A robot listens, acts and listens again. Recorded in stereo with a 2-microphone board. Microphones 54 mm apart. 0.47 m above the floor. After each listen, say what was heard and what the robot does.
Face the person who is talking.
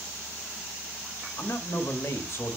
The man speaking: about 55° left or 125° left. Turn 55° left.
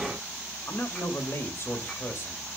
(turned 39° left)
So it is at 70° left. Turn 70° left.
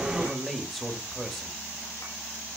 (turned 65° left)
Found it: a man speaking, straight ahead, 1 to 2 m away.